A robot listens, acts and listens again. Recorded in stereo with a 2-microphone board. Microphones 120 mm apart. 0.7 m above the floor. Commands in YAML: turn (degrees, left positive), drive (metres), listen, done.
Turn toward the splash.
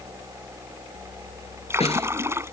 turn: -20
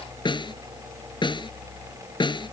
listen: true
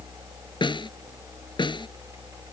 done: "I heard a splash, but can't make it out now. It was about straight ahead or 140° right."